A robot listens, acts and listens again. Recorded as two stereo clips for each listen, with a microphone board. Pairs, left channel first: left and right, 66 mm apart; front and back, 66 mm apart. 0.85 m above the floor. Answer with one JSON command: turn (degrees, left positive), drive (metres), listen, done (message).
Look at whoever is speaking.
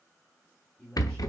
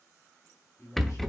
{"turn": 10}
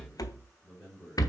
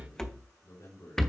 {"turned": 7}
{"done": "Found it: a man speaking, straight ahead, over 4 m away."}